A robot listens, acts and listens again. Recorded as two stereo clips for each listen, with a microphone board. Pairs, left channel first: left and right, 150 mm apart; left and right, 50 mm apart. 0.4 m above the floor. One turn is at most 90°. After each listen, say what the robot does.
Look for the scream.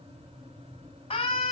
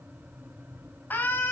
Turn 50° left.
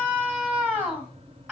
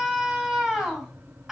Found it: a scream, straight ahead, 2 to 4 m away.